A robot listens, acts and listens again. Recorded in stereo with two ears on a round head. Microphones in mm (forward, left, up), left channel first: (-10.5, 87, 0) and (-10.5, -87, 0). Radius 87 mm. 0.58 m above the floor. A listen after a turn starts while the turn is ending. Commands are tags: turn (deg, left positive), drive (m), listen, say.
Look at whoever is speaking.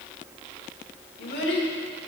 <turn deg="60"/>
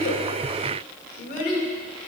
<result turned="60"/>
<turn deg="50"/>
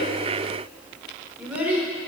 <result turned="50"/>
<turn deg="-10"/>
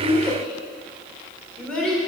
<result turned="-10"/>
<say>Found it: a child speaking, straight ahead.</say>